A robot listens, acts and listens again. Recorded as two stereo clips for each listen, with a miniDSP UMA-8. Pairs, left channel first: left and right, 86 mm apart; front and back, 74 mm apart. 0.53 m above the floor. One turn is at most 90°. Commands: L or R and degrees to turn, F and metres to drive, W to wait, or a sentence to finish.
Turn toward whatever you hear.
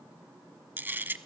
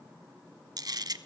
R90
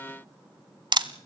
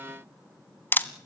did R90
R60
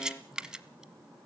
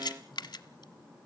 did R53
Found it: a camera shutter, straight ahead.